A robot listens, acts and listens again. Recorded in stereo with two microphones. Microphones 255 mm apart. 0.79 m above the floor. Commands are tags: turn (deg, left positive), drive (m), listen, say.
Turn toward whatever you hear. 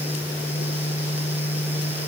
<listen/>
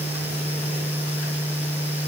<listen/>
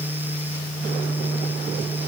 <say>I can't make out anything to turn to.</say>